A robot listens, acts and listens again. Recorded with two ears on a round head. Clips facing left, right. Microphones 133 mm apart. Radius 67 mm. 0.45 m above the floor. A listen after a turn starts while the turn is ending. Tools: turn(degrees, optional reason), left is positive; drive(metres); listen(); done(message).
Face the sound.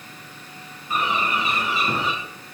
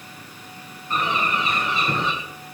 turn(degrees=30)
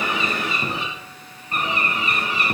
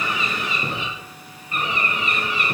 turn(degrees=145, reason="So it is at 145° left.")
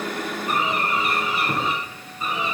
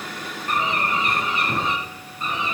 done("Found it: a bird, straight ahead, 2 to 4 m away.")